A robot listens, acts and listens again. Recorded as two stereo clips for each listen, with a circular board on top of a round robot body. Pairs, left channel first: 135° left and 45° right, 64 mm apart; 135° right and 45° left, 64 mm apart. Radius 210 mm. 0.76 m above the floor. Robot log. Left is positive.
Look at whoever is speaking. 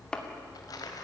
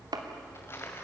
cmd idle
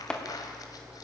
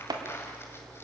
cmd idle
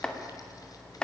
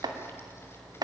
end: I can't make out anyone speaking to turn to.